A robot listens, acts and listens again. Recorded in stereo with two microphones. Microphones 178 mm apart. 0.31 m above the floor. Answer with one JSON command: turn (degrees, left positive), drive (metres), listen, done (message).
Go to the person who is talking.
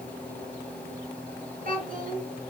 {"turn": -50}
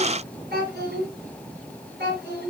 {"turn": -75}
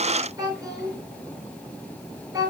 {"turn": -20}
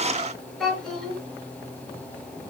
{"drive": 1.0}
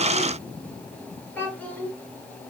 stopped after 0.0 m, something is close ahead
{"turn": 10}
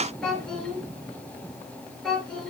{"done": "Blocked. The child speaking is further on, straight ahead."}